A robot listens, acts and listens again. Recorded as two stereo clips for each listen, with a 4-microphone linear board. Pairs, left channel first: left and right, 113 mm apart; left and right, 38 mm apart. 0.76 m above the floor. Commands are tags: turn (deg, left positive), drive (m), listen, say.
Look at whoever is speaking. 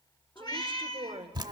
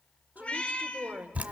<turn deg="-50"/>
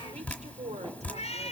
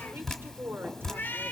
<listen/>
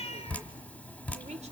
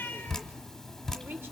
<listen/>
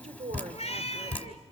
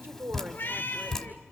<turn deg="-80"/>
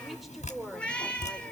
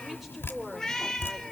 <listen/>
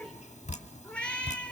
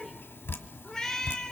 <listen/>
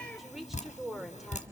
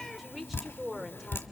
<say>Facing the woman speaking, 2 to 4 m away.</say>